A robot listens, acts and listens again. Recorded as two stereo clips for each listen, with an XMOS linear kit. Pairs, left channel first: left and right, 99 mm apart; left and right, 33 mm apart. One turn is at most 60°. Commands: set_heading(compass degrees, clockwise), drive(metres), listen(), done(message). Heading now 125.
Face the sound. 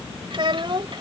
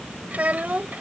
set_heading(180)
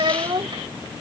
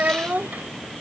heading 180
set_heading(240)
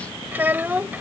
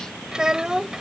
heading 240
set_heading(260)
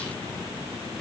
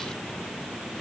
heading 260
listen()
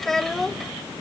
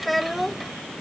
done("Facing the child speaking.")